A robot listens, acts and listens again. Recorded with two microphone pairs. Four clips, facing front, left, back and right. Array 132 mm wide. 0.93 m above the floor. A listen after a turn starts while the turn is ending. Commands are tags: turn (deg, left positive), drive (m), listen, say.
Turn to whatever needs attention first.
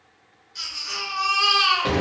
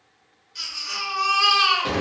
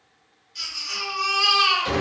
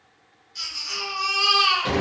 <turn deg="55"/>
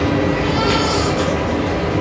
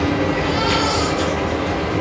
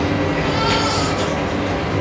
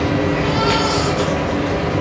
<listen/>
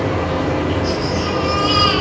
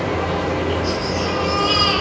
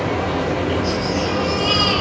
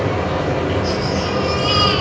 <listen/>
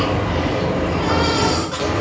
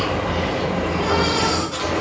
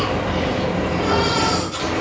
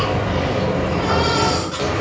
<turn deg="-15"/>
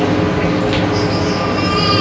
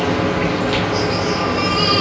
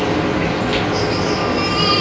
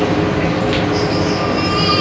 <listen/>
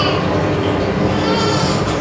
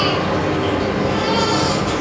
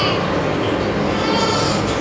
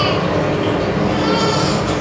<listen/>
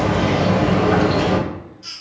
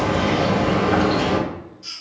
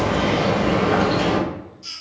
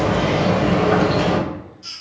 <say>Facing the baby crying, 1 to 2 m away.</say>